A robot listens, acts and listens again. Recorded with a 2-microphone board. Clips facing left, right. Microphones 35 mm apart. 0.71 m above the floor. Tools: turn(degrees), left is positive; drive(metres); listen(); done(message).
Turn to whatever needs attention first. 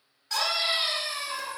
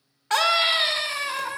turn(degrees=-50)
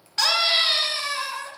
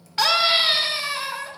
turn(degrees=-10)
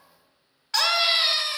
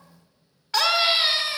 done("Facing the scream, 1 to 2 m away.")